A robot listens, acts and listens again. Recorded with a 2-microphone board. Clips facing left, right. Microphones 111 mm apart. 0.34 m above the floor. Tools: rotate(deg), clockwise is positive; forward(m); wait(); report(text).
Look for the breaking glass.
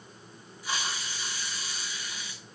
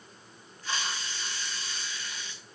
wait()
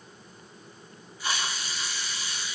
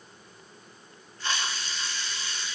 wait()
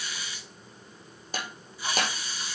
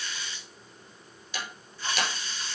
rotate(-45)
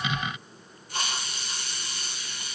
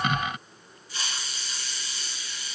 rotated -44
wait()
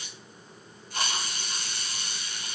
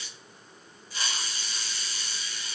report("I heard breaking glass, but can't make it out now. It was about straight ahead or 90° left.")